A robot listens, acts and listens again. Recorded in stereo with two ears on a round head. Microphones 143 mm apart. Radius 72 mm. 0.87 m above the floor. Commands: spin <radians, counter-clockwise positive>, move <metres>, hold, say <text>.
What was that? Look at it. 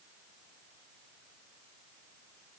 hold
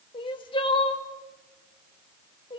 spin 0.61
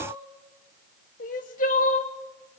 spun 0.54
spin 1.92
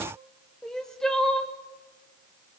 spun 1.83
say Found it: crying, straight ahead, 1 to 2 m away.